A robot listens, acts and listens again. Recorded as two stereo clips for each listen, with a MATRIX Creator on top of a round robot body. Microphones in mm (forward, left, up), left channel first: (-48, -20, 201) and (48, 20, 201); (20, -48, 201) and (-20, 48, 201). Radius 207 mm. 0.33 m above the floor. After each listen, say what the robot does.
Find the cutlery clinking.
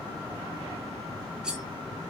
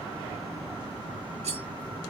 Turn 105° left.
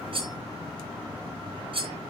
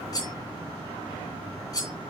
Turn 10° right.
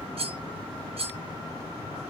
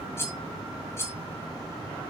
Found it: cutlery clinking, straight ahead.